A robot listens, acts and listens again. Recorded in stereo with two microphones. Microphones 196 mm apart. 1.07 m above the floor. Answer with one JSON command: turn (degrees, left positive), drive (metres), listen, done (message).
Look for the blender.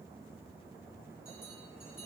{"listen": true}
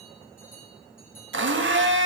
{"turn": -90}
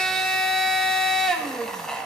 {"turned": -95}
{"done": "Facing the blender, 1 to 2 m away."}